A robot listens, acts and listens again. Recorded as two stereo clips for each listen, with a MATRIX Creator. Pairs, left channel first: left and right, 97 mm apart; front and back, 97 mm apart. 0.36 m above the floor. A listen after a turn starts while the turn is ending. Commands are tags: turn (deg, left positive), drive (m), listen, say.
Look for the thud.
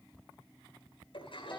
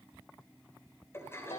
<listen/>
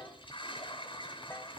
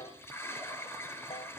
<listen/>
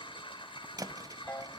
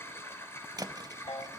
<turn deg="-135"/>
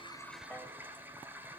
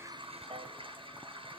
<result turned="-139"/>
<say>Facing where the thud came from. I can't hear it now.</say>